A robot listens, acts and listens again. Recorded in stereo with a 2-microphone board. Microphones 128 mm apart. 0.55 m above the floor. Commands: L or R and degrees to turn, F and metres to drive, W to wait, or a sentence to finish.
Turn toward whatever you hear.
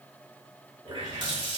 R40
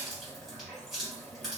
Found it: a running tap, straight ahead, 1 to 2 m away.